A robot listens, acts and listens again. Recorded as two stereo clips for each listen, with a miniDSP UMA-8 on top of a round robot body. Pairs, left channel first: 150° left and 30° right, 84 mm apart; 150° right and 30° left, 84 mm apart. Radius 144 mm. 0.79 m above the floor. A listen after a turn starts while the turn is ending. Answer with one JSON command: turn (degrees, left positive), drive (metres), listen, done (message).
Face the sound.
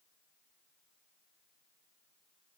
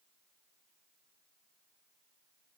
{"listen": true}
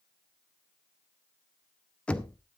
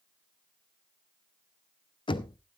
{"turn": -135}
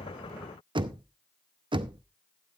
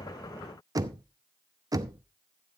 {"turn": -15}
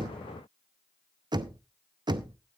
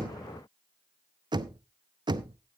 {"done": "Facing the knocking, under 1 m away."}